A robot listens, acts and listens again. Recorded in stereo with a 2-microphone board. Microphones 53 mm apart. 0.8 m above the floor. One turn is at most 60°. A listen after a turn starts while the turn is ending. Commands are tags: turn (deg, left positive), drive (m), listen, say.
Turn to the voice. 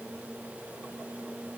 <listen/>
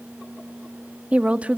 <turn deg="-25"/>
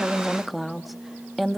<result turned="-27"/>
<say>Facing the woman speaking, 1 to 2 m away.</say>